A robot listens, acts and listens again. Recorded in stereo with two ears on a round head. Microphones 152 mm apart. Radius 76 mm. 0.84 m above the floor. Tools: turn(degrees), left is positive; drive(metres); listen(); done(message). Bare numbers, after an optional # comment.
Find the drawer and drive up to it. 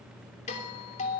listen()
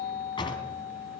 # The drawer: about 30° left or 150° left.
turn(30)
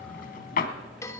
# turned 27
# So it is at 125° left.
turn(125)
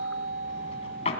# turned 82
# The drawer is now 40° left.
turn(40)
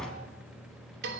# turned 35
drive(1.0)
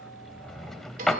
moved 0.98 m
drive(1.0)
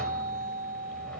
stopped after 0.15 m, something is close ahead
listen()
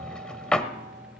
done("Arrived at the drawer, straight ahead.")